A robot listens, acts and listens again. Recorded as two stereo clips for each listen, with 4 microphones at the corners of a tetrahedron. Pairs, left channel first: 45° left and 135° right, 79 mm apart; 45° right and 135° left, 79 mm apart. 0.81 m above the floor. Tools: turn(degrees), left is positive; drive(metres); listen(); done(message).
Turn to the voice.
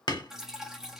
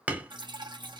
listen()
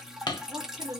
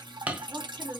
turn(degrees=180)
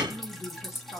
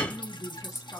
done("Facing the woman speaking, 1 to 2 m away.")